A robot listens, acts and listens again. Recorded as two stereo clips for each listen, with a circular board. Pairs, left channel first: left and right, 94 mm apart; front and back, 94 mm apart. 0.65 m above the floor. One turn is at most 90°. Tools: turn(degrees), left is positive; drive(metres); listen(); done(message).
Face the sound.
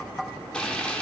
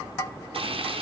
turn(degrees=90)
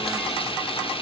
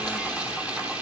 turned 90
turn(degrees=90)
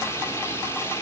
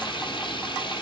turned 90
turn(degrees=30)
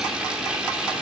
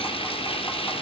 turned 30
done("Found it: frying, straight ahead.")